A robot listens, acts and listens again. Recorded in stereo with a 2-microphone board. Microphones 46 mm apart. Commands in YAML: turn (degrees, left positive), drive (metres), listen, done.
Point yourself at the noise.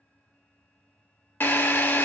turn: 55
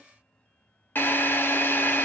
turn: 55
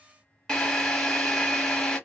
turn: 15
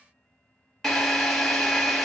done: "Facing the drill."